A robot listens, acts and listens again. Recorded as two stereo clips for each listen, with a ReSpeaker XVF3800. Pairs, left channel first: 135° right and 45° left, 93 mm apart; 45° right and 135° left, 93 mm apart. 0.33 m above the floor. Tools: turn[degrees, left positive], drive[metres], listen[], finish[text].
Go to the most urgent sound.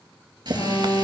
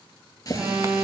Thought: The alarm: 155° right.
Action: turn[-155]
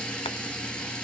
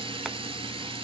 Action: listen[]
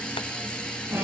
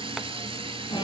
Thought: The alarm is now 15° right.
Action: turn[-15]
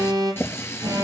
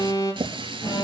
Action: drive[1.0]
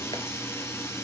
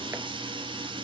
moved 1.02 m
Action: listen[]
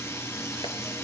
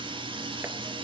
Action: listen[]
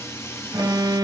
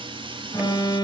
Action: drive[1.0]
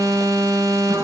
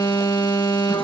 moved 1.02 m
Action: drive[1.0]
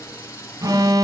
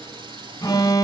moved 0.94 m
Action: drive[1.0]
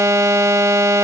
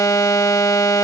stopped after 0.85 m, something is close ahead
Action: finish[Arrived at the alarm, straight ahead.]